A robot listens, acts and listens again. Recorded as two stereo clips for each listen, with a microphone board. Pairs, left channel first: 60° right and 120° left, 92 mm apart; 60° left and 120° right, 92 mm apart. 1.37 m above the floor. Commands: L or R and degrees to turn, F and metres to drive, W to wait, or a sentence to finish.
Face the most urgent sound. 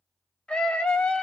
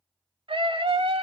R140
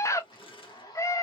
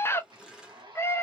Found it: a scream, straight ahead.